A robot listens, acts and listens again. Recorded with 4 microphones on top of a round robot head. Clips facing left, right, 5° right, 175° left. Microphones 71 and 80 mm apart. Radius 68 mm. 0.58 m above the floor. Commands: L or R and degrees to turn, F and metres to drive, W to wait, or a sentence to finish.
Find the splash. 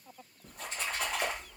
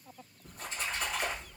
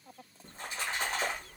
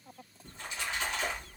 L50
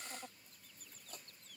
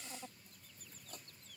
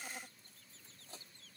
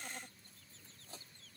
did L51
I heard a splash from this way, but can't make it out now.